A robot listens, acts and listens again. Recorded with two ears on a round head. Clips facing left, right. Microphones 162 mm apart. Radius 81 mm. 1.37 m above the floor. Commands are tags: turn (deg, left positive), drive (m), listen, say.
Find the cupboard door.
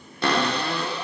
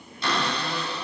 <turn deg="45"/>
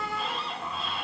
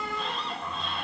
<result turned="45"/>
<say>Found it: a cupboard door, straight ahead.</say>